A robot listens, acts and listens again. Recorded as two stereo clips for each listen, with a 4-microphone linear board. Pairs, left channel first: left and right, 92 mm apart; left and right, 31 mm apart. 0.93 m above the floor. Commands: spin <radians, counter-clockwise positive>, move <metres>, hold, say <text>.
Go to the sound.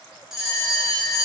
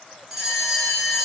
spin -0.52
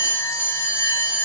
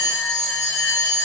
spin 0.35
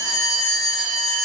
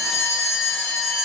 move 1.0
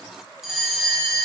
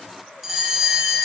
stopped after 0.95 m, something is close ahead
say I am next to the bell.